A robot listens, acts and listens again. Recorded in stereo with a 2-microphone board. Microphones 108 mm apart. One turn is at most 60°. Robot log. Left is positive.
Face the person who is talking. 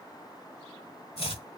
cmd idle
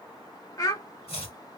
note: The child speaking: about 35° left or 145° left.
cmd yaw +35
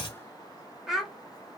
end: Found it: a child speaking, straight ahead.